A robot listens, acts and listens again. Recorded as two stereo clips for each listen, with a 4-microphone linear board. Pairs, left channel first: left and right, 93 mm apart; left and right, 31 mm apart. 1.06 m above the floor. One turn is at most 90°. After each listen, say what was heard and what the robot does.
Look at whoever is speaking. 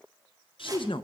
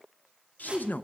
The man speaking: about 65° left or 115° left. Turn 65° left.
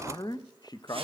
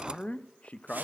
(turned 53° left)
So it is at 50° left. Turn 50° left.
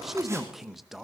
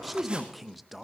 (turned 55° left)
Found it: a man speaking, straight ahead.